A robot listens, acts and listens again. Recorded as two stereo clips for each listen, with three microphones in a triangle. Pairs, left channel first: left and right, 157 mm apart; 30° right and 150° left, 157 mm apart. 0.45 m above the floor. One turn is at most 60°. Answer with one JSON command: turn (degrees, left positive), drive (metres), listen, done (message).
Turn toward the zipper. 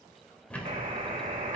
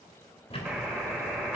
{"listen": true}
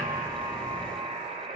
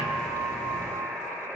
{"listen": true}
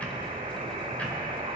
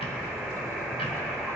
{"done": "I can't make out a zipper, only ticking and a buzzer."}